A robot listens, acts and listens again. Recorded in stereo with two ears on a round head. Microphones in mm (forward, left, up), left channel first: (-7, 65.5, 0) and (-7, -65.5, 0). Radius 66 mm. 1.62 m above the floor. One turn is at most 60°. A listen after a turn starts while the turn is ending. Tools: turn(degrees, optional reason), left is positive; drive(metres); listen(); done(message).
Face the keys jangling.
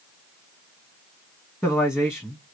listen()
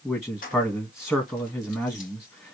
turn(degrees=60, reason="The keys jangling: about 65° left or 115° left.")
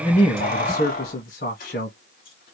turn(degrees=60, reason="So it is at 65° left.")
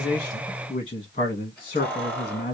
turn(degrees=10, reason="The keys jangling is now 10° left.")
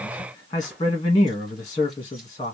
listen()
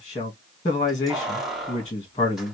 done("Facing the keys jangling.")